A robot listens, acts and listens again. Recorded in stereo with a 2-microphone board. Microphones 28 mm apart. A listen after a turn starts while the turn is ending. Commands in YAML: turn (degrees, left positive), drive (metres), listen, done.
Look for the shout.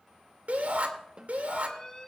turn: -70
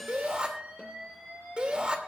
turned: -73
turn: -35
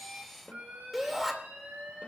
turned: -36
done: "Found it: a shout, straight ahead."